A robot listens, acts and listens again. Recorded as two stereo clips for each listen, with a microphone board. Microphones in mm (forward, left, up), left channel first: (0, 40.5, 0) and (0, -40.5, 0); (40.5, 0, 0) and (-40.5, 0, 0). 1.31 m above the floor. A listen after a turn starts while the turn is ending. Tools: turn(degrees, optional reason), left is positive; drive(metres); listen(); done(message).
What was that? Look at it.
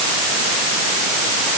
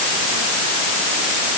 listen()
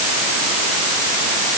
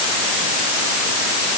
listen()
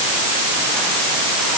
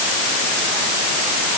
done("I can't make out anything to turn to.")